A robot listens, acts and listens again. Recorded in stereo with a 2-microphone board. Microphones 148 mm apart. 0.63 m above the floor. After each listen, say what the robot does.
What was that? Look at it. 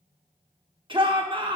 Turn 35° right.
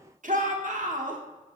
Turn 105° right.
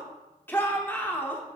Turn 15° left.
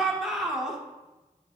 Found it: a shout, straight ahead, 1 to 2 m away.